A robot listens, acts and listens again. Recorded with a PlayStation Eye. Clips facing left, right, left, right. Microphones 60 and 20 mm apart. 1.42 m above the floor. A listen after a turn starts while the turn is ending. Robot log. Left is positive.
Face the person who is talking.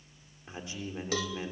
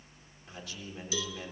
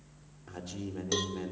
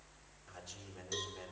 note: The man speaking: about 25° left or 155° left.
cmd yaw +25
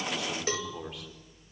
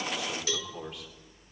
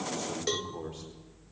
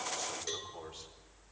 end: Found it: a man speaking, straight ahead.